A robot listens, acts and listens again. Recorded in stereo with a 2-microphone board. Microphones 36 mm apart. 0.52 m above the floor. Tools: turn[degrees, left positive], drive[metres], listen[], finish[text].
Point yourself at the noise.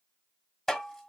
Action: turn[30]
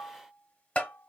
Thought: So it is at 140° left.
Action: turn[140]
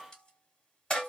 Thought: The tapping is now 20° left.
Action: turn[20]
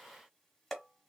Action: finish[Found it: tapping, straight ahead.]